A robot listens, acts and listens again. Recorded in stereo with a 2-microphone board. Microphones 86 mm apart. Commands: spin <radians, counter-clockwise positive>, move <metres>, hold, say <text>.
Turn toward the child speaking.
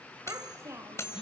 spin -0.61
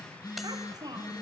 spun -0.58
spin -2.18
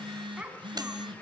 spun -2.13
spin -0.26
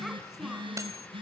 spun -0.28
hold
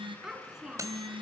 say Facing the child speaking.